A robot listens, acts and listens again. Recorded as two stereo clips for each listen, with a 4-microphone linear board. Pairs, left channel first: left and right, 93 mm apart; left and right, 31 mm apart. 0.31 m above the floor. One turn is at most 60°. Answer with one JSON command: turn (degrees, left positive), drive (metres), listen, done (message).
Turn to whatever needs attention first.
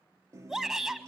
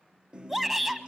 {"turn": -30}
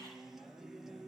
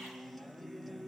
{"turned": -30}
{"listen": true}
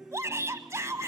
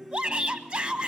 {"turn": -60}
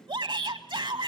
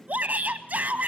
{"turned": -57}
{"turn": -60}
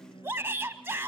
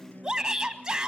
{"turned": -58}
{"turn": -30}
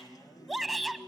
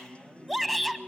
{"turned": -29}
{"done": "Facing the shout."}